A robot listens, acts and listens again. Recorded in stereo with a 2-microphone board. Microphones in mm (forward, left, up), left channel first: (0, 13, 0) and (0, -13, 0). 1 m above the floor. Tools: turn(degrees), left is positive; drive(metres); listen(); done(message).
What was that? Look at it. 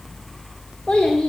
turn(degrees=45)
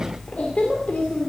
turn(degrees=105)
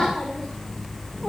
listen()
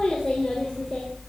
turn(degrees=20)
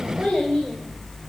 done("Facing the child speaking.")